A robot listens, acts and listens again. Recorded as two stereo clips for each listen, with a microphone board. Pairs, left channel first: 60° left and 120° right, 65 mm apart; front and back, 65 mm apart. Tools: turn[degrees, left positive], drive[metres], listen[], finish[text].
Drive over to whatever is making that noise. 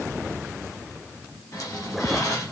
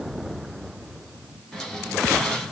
Thought: The squeak: 85° left.
Action: turn[85]
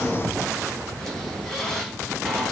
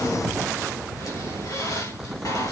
Thought: The squeak is now 20° right.
Action: turn[-20]
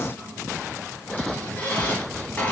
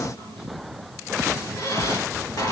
Action: drive[1.0]
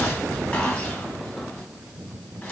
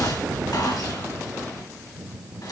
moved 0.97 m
Action: drive[1.0]
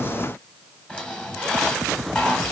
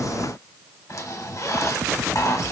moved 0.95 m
Thought: The squeak is now 10° right.
Action: turn[-10]
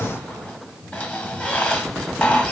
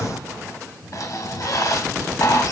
Action: drive[1.0]
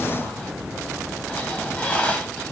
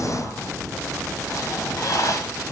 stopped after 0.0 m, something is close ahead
Action: finish[I am next to the squeak.]